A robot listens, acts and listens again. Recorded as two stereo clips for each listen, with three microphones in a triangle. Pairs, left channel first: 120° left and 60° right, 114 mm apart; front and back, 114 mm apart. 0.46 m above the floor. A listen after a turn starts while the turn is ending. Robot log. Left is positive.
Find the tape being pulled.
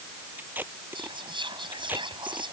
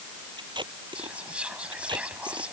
note: The tape being pulled: 135° right.
cmd yaw -135
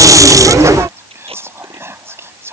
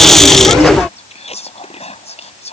cmd idle
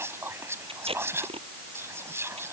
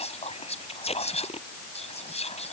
note: The tape being pulled is now 25° right.
cmd yaw -25
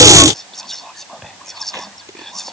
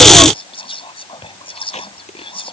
cmd idle
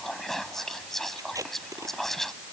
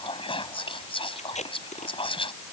end: Facing the tape being pulled.